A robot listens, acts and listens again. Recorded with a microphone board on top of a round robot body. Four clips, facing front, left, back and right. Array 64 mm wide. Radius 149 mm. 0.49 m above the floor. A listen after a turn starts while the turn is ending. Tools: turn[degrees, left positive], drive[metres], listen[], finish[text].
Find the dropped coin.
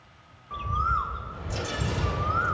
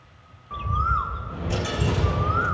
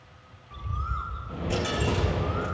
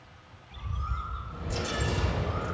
Thought: The dropped coin: 150° left.
Action: turn[150]
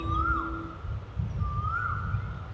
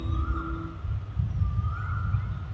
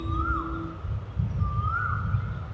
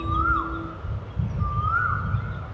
Action: finish[I heard a dropped coin from this way, but can't make it out now.]